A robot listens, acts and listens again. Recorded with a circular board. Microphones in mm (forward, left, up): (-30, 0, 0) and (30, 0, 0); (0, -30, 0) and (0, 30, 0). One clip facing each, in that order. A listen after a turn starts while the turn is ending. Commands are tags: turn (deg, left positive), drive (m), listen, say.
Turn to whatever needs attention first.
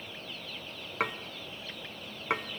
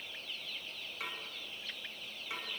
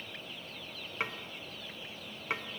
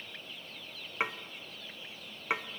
<listen/>
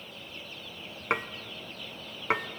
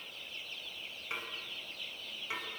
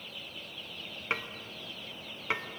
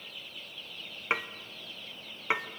<listen/>
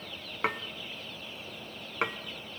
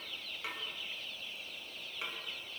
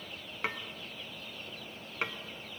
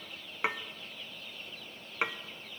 <say>I can't make out anything urgent, only dishes clattering.</say>